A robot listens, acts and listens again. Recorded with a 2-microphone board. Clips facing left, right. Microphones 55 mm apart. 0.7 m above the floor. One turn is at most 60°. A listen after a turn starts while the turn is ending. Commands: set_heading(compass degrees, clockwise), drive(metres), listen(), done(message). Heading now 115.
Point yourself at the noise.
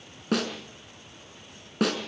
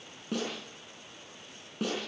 set_heading(55)
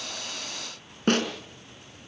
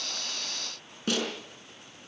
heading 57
set_heading(12)
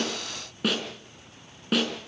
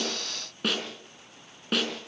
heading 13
done("Facing the snare drum.")